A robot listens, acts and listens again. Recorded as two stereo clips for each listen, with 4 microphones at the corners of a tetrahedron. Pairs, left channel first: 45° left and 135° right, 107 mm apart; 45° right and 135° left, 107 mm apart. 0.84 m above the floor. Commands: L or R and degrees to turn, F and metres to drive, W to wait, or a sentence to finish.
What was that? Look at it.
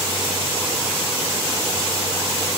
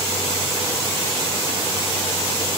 W
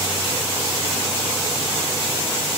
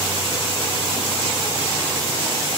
W
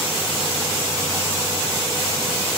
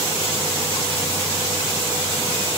I can't make out anything.